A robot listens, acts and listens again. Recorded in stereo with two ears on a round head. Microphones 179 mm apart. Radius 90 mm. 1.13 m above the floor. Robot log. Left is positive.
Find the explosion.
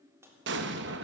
note: The explosion: about 60° right or 120° right.
cmd yaw -60
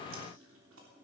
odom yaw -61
cmd idle
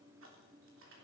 end: I heard an explosion, but can't make it out now. It was about straight ahead or 60° right.